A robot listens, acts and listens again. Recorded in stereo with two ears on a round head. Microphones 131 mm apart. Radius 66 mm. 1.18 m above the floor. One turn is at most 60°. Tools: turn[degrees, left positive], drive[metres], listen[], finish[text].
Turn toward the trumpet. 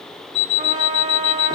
Thought: The trumpet: about 35° right or 145° right.
Action: turn[-35]
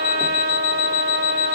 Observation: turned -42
Thought: So it is at 100° right.
Action: turn[-60]
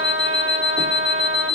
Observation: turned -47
Thought: The trumpet is now 55° right.
Action: turn[-55]
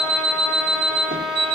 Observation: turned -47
Action: finish[Found it: a trumpet, straight ahead, 1 to 2 m away.]